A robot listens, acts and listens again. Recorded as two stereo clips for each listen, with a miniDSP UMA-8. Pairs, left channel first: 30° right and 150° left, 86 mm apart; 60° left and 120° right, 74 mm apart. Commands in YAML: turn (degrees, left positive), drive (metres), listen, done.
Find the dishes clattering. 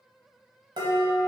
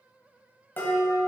turn: 125
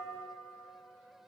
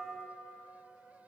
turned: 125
listen: true
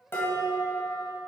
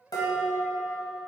turn: 30
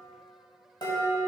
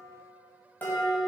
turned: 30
done: "Found it: dishes clattering, straight ahead."